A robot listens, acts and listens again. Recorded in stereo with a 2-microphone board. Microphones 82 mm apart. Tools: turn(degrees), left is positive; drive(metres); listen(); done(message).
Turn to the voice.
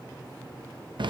listen()
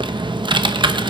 listen()
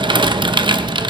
done("I can't make out anyone speaking to turn to.")